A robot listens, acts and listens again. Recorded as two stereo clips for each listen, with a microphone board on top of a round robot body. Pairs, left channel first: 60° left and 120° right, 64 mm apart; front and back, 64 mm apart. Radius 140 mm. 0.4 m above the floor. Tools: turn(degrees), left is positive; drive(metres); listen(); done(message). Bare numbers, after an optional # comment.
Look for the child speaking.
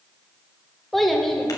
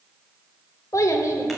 # The child speaking: 25° right.
turn(-25)
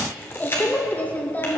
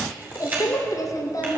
done("Found it: a child speaking, straight ahead.")